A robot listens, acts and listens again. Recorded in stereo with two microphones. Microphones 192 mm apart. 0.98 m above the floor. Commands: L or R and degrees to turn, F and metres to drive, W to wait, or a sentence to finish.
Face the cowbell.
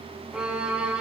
W
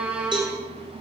R25
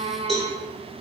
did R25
Facing the cowbell.